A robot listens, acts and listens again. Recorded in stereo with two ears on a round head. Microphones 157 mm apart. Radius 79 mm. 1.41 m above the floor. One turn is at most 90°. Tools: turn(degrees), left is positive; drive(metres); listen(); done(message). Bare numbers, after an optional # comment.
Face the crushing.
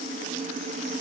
listen()
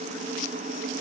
listen()
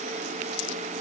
done("I can't make out crushing to turn to.")